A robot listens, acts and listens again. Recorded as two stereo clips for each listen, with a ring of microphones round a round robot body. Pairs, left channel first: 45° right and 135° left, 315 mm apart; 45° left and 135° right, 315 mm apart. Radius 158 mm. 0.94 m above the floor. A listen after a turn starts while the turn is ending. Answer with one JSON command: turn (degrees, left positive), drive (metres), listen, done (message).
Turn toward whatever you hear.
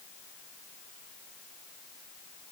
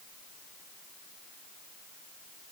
{"listen": true}
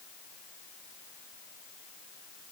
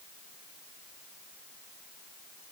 {"listen": true}
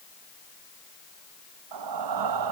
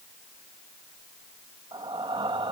{"turn": 150}
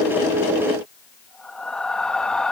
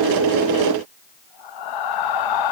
{"turn": 45}
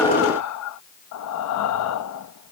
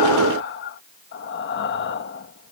{"turn": -10}
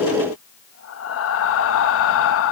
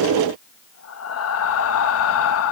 {"done": "Found it: breathing, straight ahead."}